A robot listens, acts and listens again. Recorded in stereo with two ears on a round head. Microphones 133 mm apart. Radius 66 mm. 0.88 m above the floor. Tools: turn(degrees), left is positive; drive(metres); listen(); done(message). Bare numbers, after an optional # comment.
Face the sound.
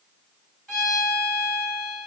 turn(30)
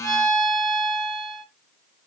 # So it is at 30° right.
turn(-30)
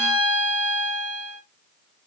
done("Found it: a violin, straight ahead, 1 to 2 m away.")